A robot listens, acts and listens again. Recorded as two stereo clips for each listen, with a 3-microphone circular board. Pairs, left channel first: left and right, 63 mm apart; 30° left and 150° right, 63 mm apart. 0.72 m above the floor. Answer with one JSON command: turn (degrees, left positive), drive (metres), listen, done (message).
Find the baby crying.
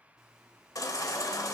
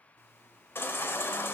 {"turn": 80}
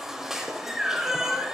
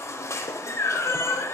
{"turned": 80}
{"turn": -10}
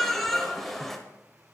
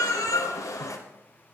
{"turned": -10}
{"done": "Found it: a baby crying, straight ahead, under 1 m away."}